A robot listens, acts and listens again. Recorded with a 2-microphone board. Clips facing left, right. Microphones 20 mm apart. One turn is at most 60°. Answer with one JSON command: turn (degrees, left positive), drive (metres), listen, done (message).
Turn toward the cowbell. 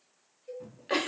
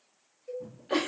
{"turn": -15}
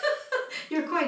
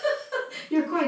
{"listen": true}
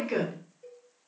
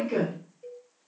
{"turn": -60}
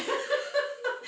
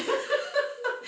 {"turn": -60}
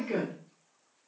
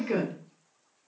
{"turn": -30}
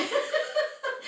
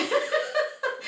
{"done": "I heard a cowbell from this way, but can't make it out now."}